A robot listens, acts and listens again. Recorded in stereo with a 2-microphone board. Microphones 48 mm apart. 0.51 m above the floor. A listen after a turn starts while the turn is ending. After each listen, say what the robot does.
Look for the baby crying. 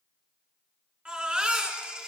Turn 25° right.
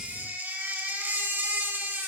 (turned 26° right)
Turn 125° right.
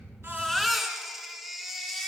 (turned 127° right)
Found it: a baby crying, straight ahead.